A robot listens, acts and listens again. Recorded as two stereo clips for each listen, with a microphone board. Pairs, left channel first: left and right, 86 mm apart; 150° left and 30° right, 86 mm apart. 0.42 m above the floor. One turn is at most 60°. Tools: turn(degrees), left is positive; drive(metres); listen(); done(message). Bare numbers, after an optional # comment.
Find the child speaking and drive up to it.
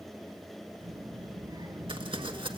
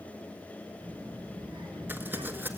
# The child speaking: 55° right.
turn(-55)
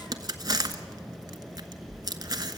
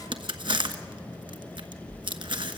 drive(1.0)
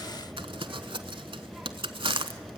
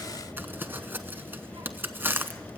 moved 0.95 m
# The child speaking is now 10° right.
turn(-10)
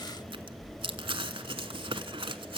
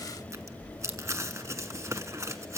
drive(1.0)
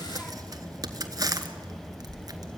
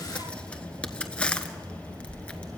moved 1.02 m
# The child speaking is now 10° left.
turn(10)
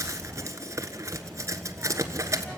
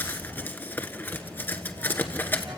drive(1.0)
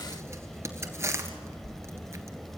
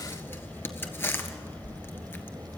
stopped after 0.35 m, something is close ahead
done("Arrived at the child speaking, straight ahead.")